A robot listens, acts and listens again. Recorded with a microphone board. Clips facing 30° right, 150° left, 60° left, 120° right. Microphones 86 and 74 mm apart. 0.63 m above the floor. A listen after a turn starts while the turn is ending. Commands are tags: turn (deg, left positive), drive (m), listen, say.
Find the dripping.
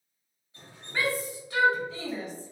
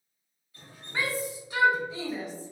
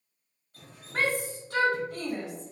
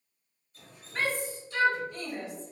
<turn deg="35"/>
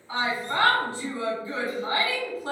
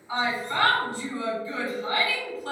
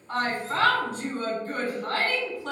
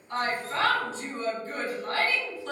<listen/>
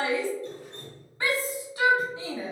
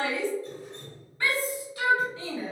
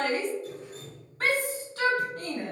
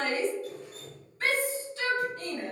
<say>Found it: dripping, straight ahead.</say>